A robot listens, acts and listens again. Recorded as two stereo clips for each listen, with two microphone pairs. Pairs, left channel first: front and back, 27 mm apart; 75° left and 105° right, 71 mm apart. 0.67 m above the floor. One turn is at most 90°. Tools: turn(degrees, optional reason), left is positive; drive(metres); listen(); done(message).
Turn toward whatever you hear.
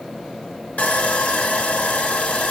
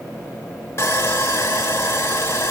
turn(degrees=20, reason="The sawing: 20° left.")
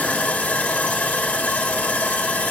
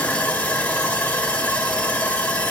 done("Found it: sawing, straight ahead.")